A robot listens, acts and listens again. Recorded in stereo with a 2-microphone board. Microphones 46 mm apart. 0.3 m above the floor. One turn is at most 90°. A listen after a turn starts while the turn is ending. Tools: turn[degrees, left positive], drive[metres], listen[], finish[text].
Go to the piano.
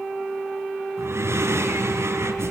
Action: listen[]
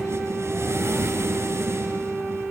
Action: listen[]
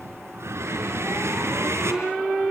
Action: finish[I can't make out a piano to turn to.]